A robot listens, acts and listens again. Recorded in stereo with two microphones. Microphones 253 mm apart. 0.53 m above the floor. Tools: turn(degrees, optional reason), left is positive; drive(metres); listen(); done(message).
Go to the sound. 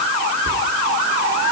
turn(degrees=-45, reason="The whispering: about 45° right or 135° right.")
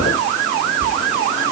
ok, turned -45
turn(degrees=-85, reason="So it is at 85° right.")
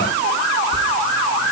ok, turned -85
listen()
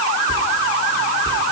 turn(degrees=-20, reason="The whispering is now 20° right.")
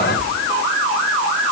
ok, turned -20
drive(metres=1.0)
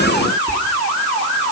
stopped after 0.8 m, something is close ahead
turn(degrees=10, reason="The whispering is now 10° left.")
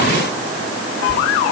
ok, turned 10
listen()
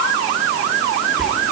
done("Arrived at the whispering, straight ahead.")